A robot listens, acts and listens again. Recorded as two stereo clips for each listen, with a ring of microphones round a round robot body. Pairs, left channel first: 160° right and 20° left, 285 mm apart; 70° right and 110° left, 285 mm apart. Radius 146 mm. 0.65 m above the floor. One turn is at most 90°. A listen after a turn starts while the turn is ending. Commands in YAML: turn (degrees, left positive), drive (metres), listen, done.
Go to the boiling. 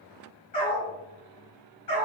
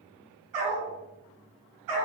listen: true
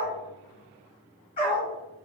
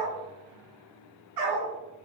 listen: true
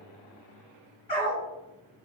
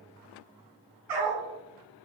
done: "I can't make out boiling to turn to."